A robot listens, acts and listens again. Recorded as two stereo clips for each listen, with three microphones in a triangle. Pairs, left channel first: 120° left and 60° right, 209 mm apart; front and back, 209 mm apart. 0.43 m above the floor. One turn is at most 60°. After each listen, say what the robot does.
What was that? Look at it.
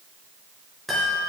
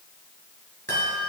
Turn 60° right.
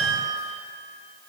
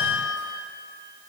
Turn 60° right.
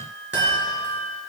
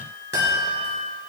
Turn 30° right.
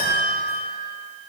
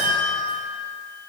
Found it: a chime, straight ahead.